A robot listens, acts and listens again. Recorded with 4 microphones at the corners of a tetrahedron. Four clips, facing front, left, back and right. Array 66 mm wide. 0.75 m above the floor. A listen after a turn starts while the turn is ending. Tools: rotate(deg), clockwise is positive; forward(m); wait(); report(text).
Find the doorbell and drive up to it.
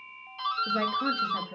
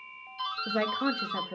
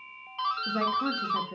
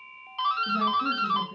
rotate(110)
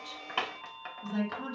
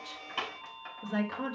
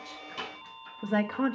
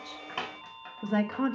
wait()
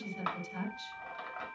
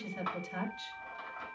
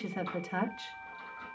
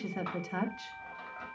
forward(1.0)
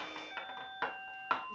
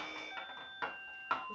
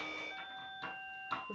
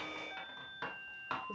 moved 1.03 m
forward(1.0)
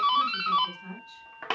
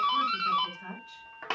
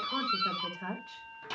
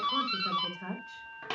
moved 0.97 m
rotate(-10)
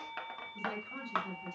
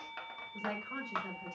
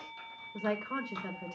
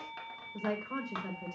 forward(1.0)
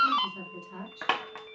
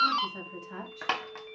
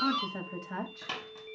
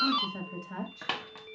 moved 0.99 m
rotate(-10)
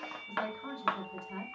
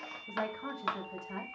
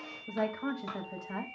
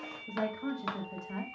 forward(1.0)
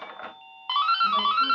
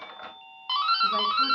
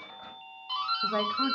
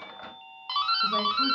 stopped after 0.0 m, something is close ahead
report("I am next to the doorbell.")